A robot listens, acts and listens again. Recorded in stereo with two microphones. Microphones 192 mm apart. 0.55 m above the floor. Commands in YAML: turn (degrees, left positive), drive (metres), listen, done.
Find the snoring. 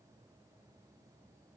listen: true
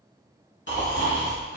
turn: 70
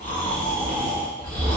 turn: 40
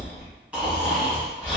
done: "Facing the snoring, 1 to 2 m away."